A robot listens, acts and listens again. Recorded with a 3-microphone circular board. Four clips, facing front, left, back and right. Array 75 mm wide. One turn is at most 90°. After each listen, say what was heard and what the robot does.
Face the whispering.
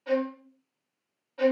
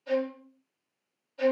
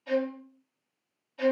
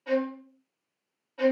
Keep listening.
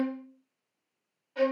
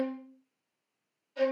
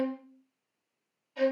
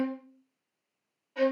Keep listening.
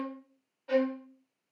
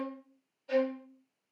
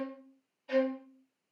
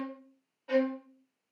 I can't make out whispering, only a violin.